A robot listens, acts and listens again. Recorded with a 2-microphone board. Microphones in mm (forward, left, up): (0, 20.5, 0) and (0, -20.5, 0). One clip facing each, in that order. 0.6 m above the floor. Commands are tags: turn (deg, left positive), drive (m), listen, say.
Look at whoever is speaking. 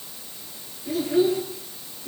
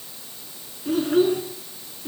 <turn deg="-50"/>
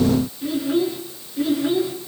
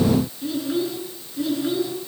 <turn deg="15"/>
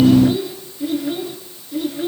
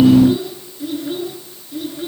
<say>Found it: a child speaking, straight ahead, over 4 m away.</say>